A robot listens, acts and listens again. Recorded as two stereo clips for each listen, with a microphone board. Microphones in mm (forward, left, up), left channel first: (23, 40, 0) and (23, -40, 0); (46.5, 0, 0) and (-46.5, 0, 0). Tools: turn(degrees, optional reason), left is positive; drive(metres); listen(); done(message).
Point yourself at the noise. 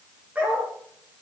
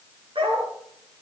turn(degrees=-160, reason="The dog barking: 160° right.")
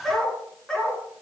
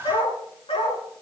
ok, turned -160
turn(degrees=10, reason="The dog barking is now 10° left.")
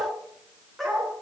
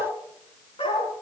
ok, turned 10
done("Facing the dog barking, over 4 m away.")